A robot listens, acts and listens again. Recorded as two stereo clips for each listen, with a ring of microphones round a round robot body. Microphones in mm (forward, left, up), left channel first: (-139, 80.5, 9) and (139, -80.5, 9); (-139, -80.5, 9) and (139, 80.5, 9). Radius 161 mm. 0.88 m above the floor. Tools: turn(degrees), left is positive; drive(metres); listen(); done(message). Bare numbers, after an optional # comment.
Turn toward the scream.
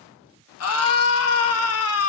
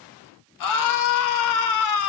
# The scream: 170° right.
turn(-170)
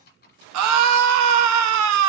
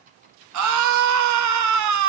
done("Facing the scream.")